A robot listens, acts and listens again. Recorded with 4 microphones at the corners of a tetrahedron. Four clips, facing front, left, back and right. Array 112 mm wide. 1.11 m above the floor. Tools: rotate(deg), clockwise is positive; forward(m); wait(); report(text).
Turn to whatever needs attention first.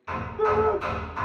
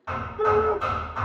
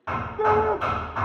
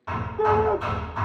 rotate(130)
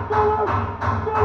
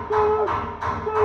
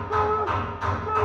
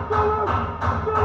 rotate(-15)
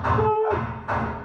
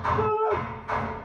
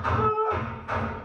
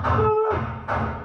report("Facing the shout, 1 to 2 m away.")